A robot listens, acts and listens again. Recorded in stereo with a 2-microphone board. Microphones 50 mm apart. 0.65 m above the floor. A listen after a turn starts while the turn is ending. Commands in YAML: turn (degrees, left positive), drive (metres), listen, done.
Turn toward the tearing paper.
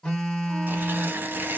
turn: -45
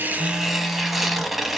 done: "Found it: tearing paper, straight ahead."